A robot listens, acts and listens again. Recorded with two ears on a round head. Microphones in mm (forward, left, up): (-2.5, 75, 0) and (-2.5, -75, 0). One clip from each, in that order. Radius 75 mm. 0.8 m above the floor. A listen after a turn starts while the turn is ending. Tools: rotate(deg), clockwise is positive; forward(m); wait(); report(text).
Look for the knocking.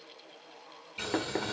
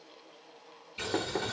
rotate(-70)
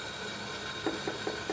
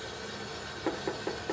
report("Found it: knocking, straight ahead, 1 to 2 m away.")